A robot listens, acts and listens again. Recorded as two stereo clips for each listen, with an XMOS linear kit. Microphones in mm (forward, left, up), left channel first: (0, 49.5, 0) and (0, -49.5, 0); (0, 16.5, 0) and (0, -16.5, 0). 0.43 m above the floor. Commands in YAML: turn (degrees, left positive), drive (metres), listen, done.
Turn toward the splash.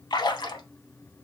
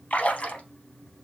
turn: 45
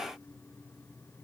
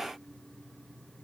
listen: true
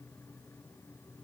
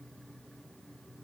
done: "I heard a splash, but can't make it out now. It was about straight ahead or 90° left."